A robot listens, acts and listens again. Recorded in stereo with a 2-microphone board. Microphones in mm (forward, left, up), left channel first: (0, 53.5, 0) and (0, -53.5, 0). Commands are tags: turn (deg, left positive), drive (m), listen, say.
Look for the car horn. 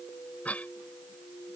<listen/>
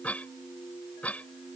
<listen/>
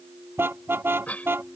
<turn deg="-20"/>
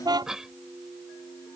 <turn deg="-140"/>
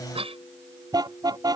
<turn deg="-40"/>
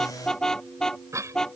<say>Found it: a car horn, straight ahead.</say>